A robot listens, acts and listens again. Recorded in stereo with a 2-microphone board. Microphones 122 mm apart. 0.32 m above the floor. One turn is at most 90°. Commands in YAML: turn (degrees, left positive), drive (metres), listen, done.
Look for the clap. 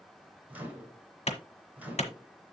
turn: 60
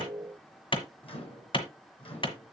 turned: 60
turn: 50
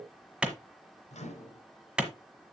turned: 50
turn: -10
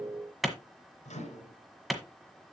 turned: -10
done: "Found it: a clap, straight ahead."